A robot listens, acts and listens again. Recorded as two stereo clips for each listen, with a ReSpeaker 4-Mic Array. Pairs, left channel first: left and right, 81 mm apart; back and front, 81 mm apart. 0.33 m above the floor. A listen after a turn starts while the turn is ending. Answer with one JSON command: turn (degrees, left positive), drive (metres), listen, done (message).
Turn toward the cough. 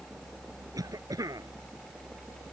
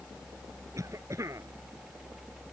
{"turn": -50}
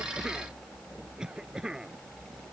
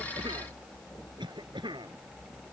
{"turn": -10}
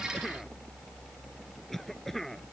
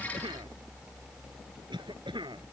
{"done": "Found it: a cough, straight ahead."}